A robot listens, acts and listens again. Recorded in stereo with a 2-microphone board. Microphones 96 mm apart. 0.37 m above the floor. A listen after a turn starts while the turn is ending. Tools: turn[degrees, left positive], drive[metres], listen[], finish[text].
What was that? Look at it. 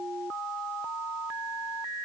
Action: listen[]
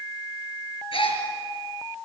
Thought: The gasp: about 70° left or 110° left.
Action: turn[70]
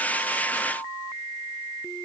Action: listen[]
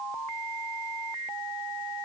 Action: finish[I heard a gasp, but can't make it out now. It was about straight ahead or 40° left.]